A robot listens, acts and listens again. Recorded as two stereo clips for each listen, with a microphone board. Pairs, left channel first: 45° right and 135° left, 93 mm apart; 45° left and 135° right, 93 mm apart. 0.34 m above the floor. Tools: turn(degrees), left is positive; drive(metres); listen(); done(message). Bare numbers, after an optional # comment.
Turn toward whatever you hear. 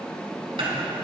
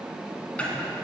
# The chopping: 120° left.
turn(120)
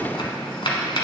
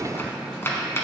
# The chopping is now 20° right.
turn(-20)
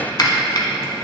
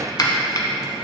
done("Facing the chopping, under 1 m away.")